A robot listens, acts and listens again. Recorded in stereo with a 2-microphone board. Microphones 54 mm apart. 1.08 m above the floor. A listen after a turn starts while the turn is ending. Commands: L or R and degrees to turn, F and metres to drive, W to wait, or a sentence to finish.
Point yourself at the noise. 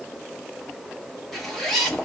L30
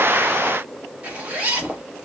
R25
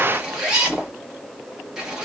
R10
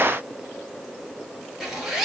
R10
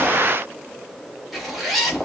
Found it: a zipper, straight ahead, 1 to 2 m away.